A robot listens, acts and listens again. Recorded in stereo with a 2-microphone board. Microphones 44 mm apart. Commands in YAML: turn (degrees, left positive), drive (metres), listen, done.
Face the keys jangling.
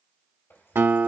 turn: 60
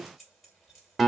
done: "Facing the keys jangling."